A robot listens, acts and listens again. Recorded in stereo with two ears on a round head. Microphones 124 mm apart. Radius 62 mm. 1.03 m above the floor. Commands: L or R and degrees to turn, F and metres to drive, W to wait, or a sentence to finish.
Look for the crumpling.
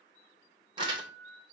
R35
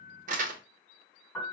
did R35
R105
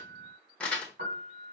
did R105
L10
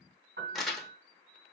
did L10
Facing the crumpling.